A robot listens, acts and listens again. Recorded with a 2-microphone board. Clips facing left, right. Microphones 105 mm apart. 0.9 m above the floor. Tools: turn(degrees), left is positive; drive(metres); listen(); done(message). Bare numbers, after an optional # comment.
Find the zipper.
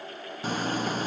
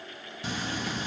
# The zipper: about 45° left or 135° left.
turn(45)
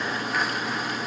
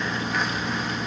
done("Facing the zipper, under 1 m away.")